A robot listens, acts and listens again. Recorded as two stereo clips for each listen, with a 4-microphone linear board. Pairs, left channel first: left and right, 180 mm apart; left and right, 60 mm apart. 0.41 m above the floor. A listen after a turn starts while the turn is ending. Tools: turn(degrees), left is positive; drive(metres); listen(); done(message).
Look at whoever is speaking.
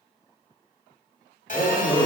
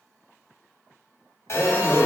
turn(degrees=30)
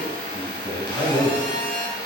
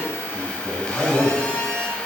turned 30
turn(degrees=130)
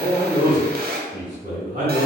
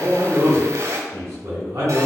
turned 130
turn(degrees=-45)
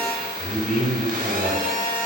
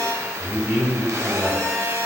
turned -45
done("Facing the man speaking, 2 to 4 m away.")